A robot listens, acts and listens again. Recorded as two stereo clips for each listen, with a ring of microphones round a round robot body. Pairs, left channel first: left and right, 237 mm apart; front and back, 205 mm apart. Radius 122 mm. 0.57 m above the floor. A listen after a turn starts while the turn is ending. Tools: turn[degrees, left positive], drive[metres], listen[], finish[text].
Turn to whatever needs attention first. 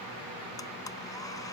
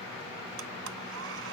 Action: listen[]
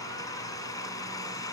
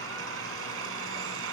Action: listen[]
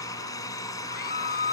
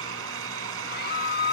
Thought: The scream: 35° left.
Action: turn[35]
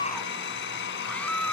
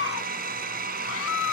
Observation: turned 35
Action: finish[Found it: a scream, straight ahead.]